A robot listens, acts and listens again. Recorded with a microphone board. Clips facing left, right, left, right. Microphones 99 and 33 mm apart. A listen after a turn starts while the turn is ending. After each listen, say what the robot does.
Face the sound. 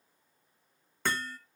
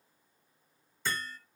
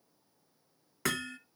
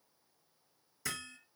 Turn 65° left.
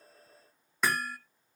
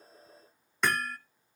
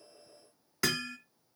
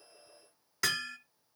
Found it: hammering, straight ahead.